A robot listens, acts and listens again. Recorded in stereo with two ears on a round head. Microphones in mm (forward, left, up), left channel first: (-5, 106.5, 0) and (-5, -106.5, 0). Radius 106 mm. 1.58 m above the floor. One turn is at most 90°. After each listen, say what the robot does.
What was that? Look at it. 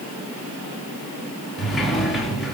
Turn 30° left.
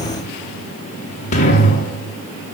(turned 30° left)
Turn 90° left.
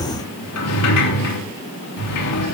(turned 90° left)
Turn 90° left.
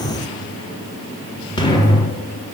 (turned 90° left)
Turn 20° left.
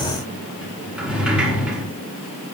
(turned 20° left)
Found it: a sliding door, straight ahead, 2 to 4 m away.